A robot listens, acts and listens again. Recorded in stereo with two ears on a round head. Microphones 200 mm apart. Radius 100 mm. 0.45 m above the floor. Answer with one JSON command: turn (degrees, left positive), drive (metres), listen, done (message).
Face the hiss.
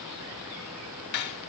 {"listen": true}
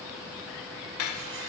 {"listen": true}
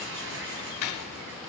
{"turn": -55}
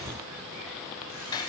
{"listen": true}
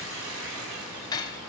{"turn": -65}
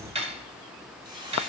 {"turn": -20}
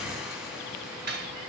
{"listen": true}
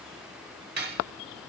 {"listen": true}
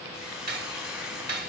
{"done": "Found it: a hiss, straight ahead."}